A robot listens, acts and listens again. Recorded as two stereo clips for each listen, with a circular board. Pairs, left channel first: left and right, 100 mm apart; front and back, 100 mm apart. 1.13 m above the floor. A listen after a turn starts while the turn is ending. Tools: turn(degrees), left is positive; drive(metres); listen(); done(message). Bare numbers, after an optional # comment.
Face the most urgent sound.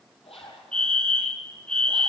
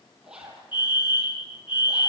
# The fire alarm: 10° left.
turn(10)
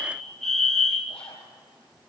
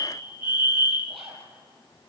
done("Found it: a fire alarm, straight ahead, 2 to 4 m away.")